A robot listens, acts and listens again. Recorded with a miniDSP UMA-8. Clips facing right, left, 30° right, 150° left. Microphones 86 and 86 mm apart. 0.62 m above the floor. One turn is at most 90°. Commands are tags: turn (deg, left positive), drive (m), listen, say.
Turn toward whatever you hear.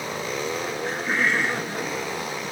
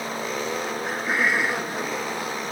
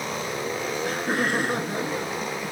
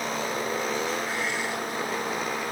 <say>Found it: laughter, straight ahead.</say>